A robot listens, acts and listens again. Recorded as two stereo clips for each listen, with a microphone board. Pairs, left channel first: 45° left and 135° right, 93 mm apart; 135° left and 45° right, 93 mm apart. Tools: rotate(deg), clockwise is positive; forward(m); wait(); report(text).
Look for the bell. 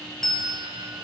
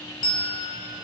rotate(-130)
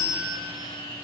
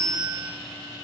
rotate(-10)
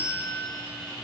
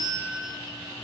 report("Found it: a bell, straight ahead.")